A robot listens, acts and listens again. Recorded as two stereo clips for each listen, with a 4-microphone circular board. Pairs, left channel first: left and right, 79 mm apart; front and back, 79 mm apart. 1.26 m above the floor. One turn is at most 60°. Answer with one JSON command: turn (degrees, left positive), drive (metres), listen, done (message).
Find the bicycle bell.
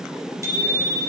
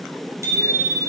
{"turn": -60}
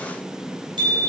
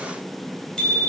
{"turn": -60}
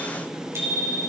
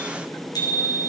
{"turn": -35}
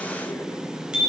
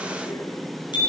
{"turn": -10}
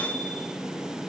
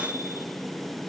{"listen": true}
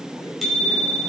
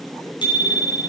{"done": "Found it: a bicycle bell, straight ahead, over 4 m away."}